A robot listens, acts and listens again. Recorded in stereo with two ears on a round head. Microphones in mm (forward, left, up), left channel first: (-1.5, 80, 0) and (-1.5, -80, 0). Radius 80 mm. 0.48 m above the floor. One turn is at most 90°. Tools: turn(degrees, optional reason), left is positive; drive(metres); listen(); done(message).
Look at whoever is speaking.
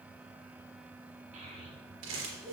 turn(degrees=-45, reason="The child speaking: about 45° right or 135° right.")
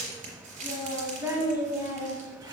turn(degrees=-25, reason="So it is at 25° right.")
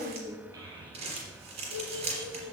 turn(degrees=-35, reason="The child speaking is now 35° right.")
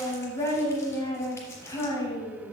turn(degrees=15, reason="The child speaking is now 15° left.")
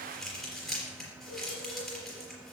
listen()
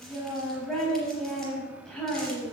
done("Facing the child speaking.")